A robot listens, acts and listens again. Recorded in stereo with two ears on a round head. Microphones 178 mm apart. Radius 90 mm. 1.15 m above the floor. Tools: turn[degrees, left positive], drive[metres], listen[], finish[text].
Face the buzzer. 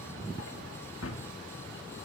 Action: listen[]
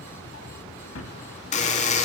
Thought: The buzzer: about 35° left or 145° left.
Action: turn[35]
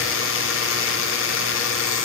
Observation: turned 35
Thought: So it is at 105° left.
Action: turn[105]
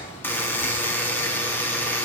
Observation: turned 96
Thought: The buzzer is now 10° left.
Action: turn[10]
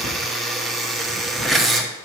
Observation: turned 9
Action: finish[Facing the buzzer, 1 to 2 m away.]